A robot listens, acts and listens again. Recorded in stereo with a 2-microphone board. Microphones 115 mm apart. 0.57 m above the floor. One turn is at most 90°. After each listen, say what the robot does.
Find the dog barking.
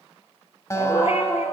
Turn 70° left.
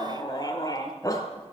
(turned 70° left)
Turn 30° left.
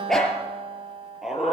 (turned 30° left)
Found it: a dog barking, straight ahead, over 4 m away.